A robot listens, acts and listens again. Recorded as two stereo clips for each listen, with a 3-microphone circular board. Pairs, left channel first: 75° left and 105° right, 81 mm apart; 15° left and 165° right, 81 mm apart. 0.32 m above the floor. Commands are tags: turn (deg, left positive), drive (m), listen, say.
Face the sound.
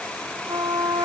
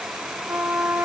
<turn deg="-105"/>
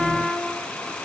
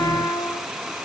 <turn deg="-10"/>
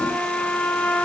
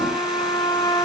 <say>Facing the trumpet, 2 to 4 m away.</say>